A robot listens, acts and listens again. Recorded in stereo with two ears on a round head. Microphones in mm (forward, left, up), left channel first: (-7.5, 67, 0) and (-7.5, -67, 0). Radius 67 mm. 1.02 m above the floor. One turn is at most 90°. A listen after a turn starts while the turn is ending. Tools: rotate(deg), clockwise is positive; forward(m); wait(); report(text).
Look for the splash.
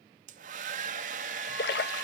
rotate(-90)
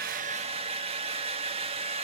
report("I heard a splash from this way, but can't make it out now.")